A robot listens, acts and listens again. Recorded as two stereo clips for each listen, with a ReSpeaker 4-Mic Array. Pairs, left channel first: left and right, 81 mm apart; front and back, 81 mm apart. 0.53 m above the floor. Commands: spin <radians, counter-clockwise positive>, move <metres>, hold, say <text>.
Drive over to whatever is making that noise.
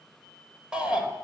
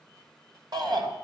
spin -2.88
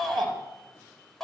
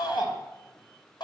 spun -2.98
move 1.0
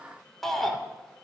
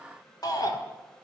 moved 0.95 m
move 1.0
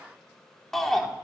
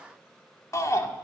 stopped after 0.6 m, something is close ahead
say Arrived at the shout, straight ahead.